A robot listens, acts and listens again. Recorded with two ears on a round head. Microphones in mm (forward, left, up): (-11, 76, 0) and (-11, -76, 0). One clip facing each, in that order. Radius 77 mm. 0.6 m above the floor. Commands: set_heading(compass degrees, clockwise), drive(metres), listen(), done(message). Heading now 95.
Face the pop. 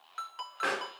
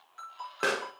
set_heading(150)
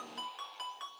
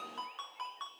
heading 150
listen()
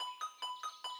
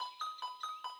done("I heard a pop, but can't make it out now. It was about straight ahead or 70° right.")